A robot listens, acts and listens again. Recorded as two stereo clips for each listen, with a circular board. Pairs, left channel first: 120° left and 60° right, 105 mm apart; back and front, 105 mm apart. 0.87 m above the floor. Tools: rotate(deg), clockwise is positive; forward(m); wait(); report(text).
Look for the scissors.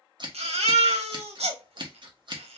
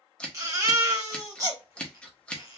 rotate(100)
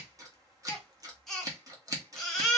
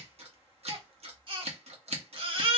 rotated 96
report("Found it: scissors, straight ahead.")